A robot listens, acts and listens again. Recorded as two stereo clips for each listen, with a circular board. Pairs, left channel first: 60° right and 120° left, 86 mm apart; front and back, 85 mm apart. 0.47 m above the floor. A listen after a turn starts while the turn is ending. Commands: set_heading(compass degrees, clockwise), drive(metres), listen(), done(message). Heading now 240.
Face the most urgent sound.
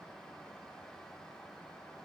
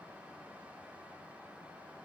listen()
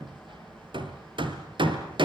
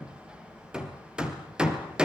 listen()
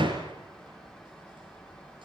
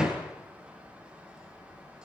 done("I can't make out anything urgent, only hammering.")